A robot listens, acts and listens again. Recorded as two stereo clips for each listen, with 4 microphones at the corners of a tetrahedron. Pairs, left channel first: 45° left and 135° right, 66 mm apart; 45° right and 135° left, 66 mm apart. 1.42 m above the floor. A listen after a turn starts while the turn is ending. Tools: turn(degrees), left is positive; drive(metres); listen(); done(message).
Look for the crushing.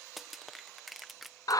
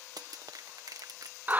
turn(degrees=135)
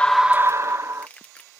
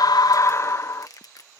turn(degrees=-25)
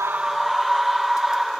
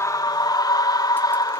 listen()
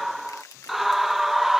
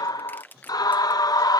turn(degrees=15)
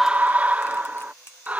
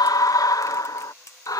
done("Found it: crushing, straight ahead.")